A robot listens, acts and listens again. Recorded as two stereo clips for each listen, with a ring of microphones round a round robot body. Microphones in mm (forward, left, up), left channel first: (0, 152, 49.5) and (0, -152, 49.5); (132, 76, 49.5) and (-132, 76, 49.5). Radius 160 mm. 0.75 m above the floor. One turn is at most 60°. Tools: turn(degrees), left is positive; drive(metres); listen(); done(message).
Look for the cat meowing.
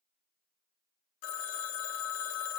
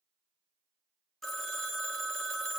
listen()
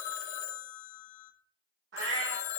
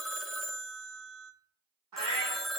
turn(degrees=-60)
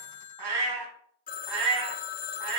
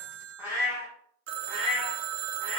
turn(degrees=-60)
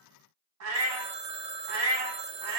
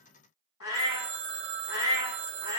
turn(degrees=-50)
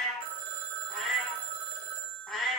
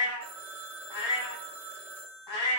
done("Found it: a cat meowing, straight ahead.")